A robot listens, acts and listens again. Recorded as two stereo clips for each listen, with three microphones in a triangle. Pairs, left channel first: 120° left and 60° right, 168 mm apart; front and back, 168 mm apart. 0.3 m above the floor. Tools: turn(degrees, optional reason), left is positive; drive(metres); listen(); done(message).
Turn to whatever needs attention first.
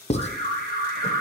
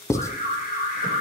turn(degrees=-40, reason="The alarm: 40° right.")
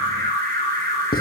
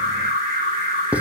turn(degrees=-15, reason="The alarm is now 15° right.")
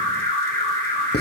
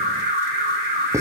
done("Facing the alarm.")